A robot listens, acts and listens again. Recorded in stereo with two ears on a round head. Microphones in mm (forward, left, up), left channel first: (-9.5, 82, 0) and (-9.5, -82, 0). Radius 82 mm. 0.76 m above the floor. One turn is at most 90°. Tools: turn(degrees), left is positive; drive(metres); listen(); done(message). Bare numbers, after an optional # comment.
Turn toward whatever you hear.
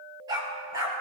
# The dog barking: about 20° right or 160° right.
turn(-20)
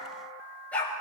# So it is at 10° left.
turn(10)
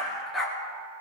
done("Facing the dog barking.")